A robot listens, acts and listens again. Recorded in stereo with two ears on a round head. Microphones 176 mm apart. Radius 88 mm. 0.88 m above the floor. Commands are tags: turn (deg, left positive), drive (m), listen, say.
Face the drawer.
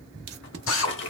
<turn deg="65"/>
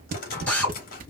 <turn deg="45"/>
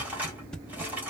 <turn deg="-10"/>
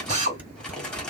<say>Facing the drawer, 1 to 2 m away.</say>